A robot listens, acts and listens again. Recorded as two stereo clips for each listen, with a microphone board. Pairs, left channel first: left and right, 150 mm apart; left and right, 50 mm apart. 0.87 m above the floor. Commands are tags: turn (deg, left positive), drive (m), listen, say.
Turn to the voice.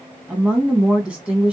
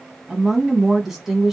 <turn deg="-30"/>
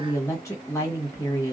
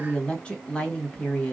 <turn deg="25"/>
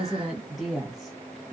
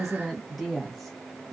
<say>Facing the woman speaking, 1 to 2 m away.</say>